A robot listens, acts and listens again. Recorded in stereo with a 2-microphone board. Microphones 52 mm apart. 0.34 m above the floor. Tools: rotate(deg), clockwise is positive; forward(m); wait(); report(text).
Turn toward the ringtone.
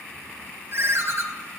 rotate(50)
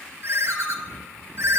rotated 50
rotate(70)
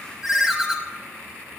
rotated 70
report("Found it: a ringtone, straight ahead, under 1 m away.")